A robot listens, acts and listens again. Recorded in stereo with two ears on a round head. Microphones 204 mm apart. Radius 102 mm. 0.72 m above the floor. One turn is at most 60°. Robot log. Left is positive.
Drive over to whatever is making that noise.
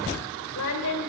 cmd yaw +60
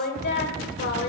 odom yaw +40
note: So it is at 50° left.
cmd yaw +50
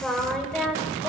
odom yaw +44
cmd fwd 1.0
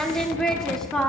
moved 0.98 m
cmd fwd 1.0
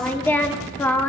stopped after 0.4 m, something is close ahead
note: The singing is now 10° left.
cmd yaw +10
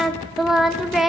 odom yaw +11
end: I am next to the singing.